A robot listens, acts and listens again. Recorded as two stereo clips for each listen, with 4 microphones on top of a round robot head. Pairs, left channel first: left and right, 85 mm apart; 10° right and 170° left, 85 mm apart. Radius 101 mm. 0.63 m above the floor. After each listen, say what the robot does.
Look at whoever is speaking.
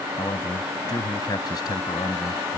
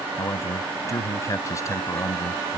Turn 45° left.
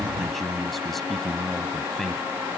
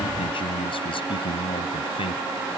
Found it: a man speaking, straight ahead.